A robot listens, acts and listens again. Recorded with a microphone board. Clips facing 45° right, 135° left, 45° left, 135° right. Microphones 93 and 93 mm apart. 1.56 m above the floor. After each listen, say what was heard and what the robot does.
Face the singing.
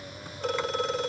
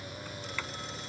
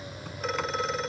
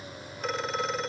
Keep listening.
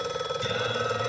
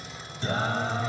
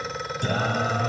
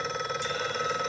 The singing: 75° left. Turn 75° left.
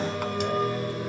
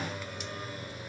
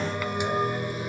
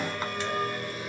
The singing is now 30° right. Turn 30° right.
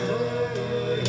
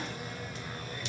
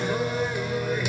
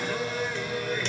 The singing is now 35° right. Turn 35° right.
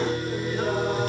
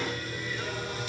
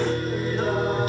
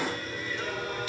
Facing the singing.